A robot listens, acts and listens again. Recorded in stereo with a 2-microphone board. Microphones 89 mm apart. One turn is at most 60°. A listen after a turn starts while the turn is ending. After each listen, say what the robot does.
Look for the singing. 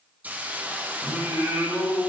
Turn 30° right.
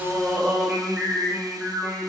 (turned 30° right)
Turn 20° right.
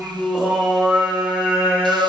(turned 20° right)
Turn 20° right.
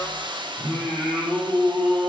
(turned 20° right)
Turn 10° right.
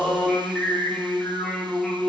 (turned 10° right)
Facing the singing, 2 to 4 m away.